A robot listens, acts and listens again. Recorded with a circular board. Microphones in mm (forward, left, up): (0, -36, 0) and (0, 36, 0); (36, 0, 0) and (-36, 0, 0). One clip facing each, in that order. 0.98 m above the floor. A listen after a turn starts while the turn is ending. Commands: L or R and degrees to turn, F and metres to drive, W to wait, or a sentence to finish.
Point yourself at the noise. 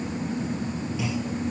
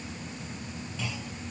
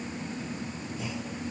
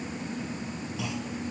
R170
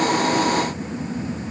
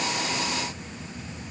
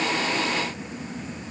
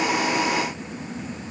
Facing where the clunk came from. I can't hear it now.